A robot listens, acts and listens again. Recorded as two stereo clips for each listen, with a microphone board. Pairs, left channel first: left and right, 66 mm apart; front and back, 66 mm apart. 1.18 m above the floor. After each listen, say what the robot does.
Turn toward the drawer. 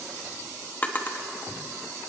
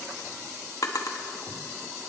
Turn 25° left.
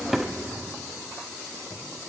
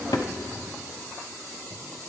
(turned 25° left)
Keep listening.
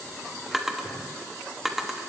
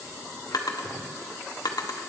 Found it: a drawer, straight ahead, 1 to 2 m away.